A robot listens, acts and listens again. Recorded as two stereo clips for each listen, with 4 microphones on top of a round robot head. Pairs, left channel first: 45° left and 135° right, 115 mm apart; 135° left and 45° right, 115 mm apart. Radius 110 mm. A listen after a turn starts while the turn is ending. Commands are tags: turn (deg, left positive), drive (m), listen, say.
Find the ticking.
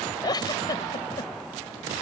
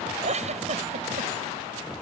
<listen/>
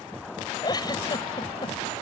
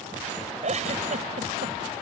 <listen/>
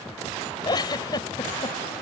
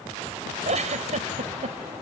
<say>I can't make out ticking to turn to.</say>